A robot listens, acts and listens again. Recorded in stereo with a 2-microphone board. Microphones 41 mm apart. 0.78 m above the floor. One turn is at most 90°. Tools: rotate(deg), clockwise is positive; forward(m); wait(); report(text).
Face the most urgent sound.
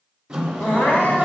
rotate(-65)
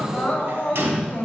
rotate(-45)
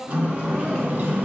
rotate(-10)
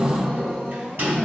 report("Found it: crying, straight ahead.")